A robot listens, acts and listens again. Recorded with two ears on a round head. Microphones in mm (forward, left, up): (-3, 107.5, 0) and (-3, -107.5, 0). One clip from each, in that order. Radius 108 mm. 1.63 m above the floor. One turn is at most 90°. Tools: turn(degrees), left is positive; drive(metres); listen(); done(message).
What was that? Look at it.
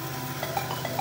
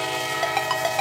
turn(degrees=-50)
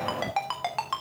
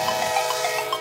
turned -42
turn(degrees=-25)
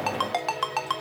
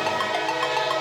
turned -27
listen()
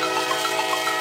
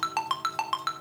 done("Facing the ringtone.")